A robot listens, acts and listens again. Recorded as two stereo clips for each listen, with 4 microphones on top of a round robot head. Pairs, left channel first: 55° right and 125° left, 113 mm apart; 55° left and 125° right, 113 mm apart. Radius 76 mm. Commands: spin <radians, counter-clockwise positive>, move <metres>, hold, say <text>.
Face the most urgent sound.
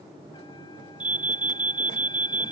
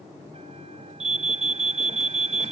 spin -2.71
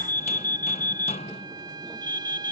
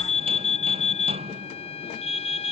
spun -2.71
spin 0.35
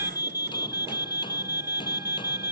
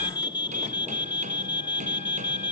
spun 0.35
say Facing the alarm.